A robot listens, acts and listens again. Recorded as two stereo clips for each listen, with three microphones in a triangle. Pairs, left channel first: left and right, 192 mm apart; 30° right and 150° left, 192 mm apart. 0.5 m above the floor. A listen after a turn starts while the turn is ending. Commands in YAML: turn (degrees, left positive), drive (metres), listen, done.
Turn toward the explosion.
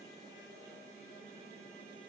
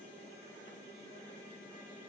listen: true
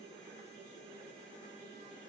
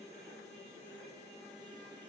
listen: true
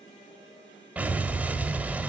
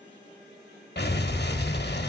turn: -10
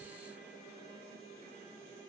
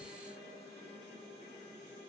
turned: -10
done: "I heard an explosion from this way, but can't make it out now."